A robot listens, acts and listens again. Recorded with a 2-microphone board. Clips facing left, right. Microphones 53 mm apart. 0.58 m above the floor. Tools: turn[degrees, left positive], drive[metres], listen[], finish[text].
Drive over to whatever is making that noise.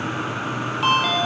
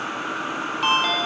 Action: turn[30]
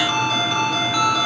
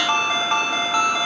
Thought: So it is at 30° right.
Action: turn[-30]
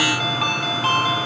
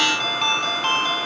Action: drive[1.0]
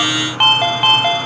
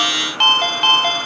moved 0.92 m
Thought: The ringtone is now 10° left.
Action: turn[10]
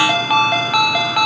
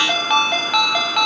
Action: drive[1.0]
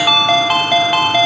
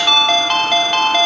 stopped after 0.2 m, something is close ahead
Thought: The ringtone is now 10° left.
Action: turn[10]
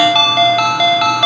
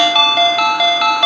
Action: finish[I am next to the ringtone.]